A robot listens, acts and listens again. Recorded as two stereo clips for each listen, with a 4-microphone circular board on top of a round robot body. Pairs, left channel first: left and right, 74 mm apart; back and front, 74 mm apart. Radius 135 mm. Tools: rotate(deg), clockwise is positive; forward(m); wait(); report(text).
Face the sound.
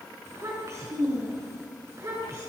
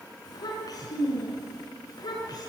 rotate(140)
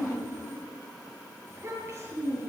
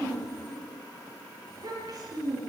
rotate(25)
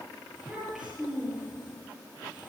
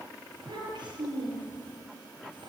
report("Found it: a child speaking, straight ahead, over 4 m away.")